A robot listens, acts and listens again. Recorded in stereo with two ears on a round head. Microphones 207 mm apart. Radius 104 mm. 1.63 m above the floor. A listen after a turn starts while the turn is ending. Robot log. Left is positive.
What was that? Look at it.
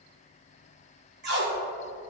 note: The tape being pulled: about 50° right or 130° right.
cmd yaw -50
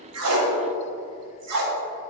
note: So it is at 80° right.
cmd yaw -80
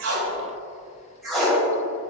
end: Found it: tape being pulled, straight ahead, 1 to 2 m away.